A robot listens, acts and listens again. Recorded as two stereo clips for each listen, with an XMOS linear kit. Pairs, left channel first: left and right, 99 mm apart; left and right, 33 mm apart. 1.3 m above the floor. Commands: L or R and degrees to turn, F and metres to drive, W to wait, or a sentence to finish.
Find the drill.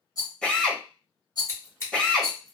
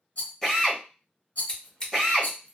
L30
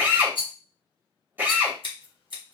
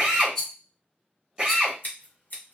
R20
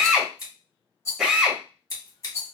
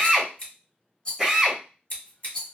Found it: a drill, straight ahead, 1 to 2 m away.